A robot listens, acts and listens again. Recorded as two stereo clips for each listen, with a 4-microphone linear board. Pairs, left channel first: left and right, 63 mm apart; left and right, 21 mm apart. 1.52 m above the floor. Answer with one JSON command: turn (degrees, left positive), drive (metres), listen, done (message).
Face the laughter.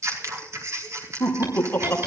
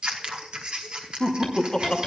{"turn": 30}
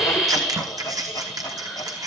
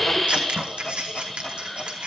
{"listen": true}
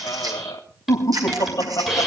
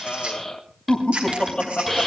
{"turn": 110}
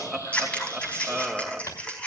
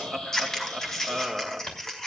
{"turn": -10}
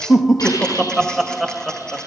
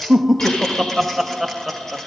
{"done": "Facing the laughter, 2 to 4 m away."}